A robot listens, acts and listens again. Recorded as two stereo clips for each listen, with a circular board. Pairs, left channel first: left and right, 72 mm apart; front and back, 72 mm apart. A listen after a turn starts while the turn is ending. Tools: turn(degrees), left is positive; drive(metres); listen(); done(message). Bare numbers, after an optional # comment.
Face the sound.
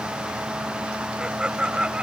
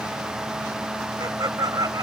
# The laughter: 165° right.
turn(-165)
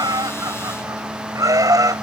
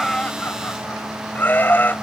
# The laughter is now 60° right.
turn(-60)
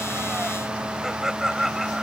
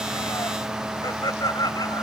done("Found it: laughter, straight ahead.")